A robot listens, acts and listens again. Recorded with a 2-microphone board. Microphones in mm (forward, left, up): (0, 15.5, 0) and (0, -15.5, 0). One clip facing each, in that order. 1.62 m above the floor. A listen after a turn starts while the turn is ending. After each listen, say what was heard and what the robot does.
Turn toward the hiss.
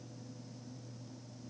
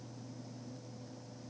Keep listening.
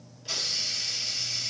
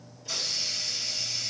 The hiss: about 30° left or 150° left. Turn 30° left.
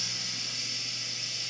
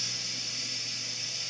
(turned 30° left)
So it is at 115° left. Turn 115° left.
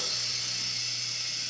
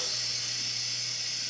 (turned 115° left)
The hiss is now 45° left. Turn 45° left.
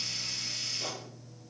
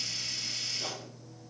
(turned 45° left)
The hiss is now 10° right. Turn 10° right.
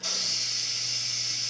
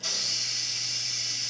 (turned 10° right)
Facing the hiss, 1 to 2 m away.